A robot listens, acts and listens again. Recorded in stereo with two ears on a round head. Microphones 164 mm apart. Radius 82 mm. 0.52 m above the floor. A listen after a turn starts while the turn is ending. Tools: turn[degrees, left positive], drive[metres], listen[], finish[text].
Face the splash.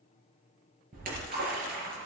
Thought: The splash: about 50° right or 130° right.
Action: turn[-50]
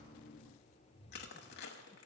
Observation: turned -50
Action: listen[]
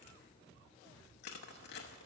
Action: finish[I heard a splash, but can't make it out now. It was about straight ahead or 80° right.]